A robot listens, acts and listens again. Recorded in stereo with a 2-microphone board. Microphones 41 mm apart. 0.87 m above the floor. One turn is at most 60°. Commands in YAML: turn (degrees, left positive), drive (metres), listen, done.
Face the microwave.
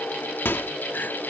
turn: 60
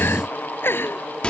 turn: 30
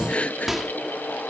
done: "Facing the microwave."